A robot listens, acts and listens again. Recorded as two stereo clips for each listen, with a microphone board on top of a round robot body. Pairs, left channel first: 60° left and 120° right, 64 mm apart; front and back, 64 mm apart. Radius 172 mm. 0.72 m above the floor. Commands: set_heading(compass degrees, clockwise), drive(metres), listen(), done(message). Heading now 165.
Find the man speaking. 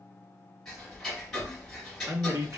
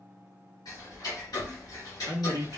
set_heading(315)
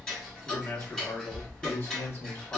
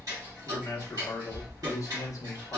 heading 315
set_heading(300)
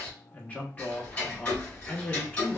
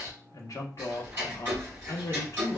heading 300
done("Facing the man speaking.")